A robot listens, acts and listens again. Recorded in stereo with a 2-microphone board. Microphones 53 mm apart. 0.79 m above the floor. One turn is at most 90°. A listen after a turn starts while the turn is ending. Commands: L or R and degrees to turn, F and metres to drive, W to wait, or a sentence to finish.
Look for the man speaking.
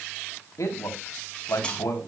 L90
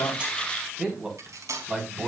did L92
R25
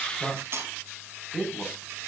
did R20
Found it: a man speaking, straight ahead.